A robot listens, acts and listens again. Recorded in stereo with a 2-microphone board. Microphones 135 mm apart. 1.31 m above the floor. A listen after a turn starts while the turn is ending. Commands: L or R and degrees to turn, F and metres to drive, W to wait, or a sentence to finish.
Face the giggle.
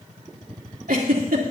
R90
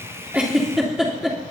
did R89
Found it: a giggle, straight ahead.